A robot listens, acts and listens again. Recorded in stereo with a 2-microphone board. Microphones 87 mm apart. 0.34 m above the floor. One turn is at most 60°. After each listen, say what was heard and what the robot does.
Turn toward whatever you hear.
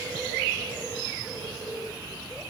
Keep listening.
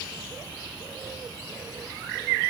Keep listening.
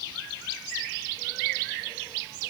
I can't make out anything to turn to.